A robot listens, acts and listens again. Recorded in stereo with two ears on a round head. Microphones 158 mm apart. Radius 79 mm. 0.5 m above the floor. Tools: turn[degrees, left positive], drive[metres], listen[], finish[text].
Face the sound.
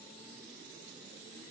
Action: listen[]
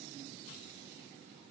Action: listen[]
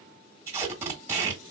Action: turn[-30]
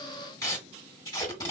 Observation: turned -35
Thought: So it is at 20° left.
Action: turn[20]
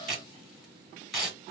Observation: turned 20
Action: finish[Found it: tape being pulled, straight ahead, 1 to 2 m away.]